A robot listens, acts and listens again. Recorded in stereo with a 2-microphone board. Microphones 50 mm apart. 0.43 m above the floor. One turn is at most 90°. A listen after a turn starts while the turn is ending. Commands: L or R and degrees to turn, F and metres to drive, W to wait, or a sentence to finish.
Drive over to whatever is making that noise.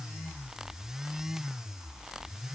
W
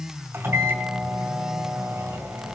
R55
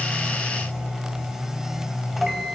F1.0
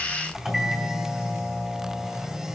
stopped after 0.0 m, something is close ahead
R10
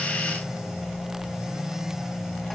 Blocked. The microwave is further on, straight ahead.